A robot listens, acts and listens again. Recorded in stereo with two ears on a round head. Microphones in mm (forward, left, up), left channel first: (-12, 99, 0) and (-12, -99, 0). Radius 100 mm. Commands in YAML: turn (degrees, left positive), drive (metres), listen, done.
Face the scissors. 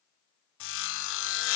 listen: true
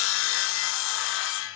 listen: true
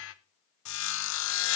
done: "I can't make out scissors to turn to."